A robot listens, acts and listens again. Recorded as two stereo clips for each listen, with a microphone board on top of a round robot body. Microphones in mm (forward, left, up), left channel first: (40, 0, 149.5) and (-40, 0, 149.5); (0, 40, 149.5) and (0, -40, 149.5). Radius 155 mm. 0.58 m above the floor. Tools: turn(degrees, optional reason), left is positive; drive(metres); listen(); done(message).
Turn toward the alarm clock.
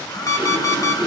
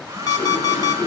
turn(degrees=50, reason="The alarm clock: 50° left.")
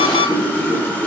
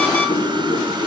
listen()
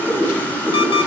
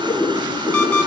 turn(degrees=15, reason="The alarm clock is now 15° left.")
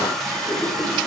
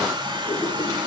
listen()
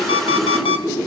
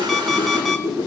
done("Found it: an alarm clock, straight ahead, 1 to 2 m away.")